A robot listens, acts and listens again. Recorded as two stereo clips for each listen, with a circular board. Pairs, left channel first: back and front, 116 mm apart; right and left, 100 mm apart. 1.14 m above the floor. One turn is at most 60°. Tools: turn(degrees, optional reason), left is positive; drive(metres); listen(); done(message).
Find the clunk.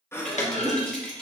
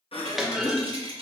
turn(degrees=60, reason="The clunk: 175° left.")
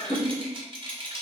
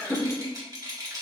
turn(degrees=60, reason="Nothing new. It was at 115° left.")
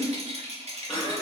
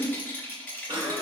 turn(degrees=55, reason="Nothing new. It was at 55° left.")
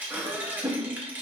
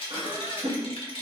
done("I heard a clunk from this way, but can't make it out now.")